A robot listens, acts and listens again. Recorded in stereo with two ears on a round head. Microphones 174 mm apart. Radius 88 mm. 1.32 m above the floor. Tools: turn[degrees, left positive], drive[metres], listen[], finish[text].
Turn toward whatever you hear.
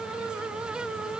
Action: listen[]
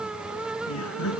Action: turn[90]
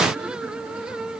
Action: listen[]
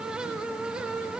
Action: listen[]
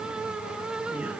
Action: finish[I heard laughter from this way, but can't make it out now.]